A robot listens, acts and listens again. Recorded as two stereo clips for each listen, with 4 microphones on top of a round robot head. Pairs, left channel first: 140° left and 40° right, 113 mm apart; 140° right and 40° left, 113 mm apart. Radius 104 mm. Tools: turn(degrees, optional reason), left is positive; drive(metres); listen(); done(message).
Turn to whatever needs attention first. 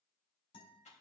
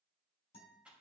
listen()
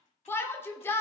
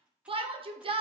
turn(degrees=70, reason="The shout: 70° left.")
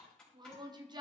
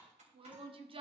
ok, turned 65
done("Found it: a shout, straight ahead, 1 to 2 m away.")